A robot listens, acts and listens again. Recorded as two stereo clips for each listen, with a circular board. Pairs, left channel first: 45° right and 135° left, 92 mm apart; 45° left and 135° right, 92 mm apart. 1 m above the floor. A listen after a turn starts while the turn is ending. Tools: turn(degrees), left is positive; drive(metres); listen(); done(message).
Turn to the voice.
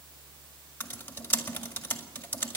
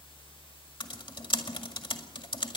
listen()
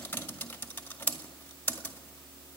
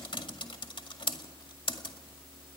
listen()
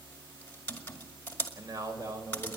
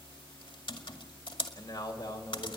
turn(degrees=85)
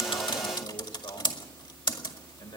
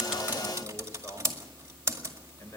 turn(degrees=-15)
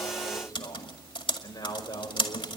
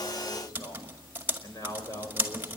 done("Facing the man speaking.")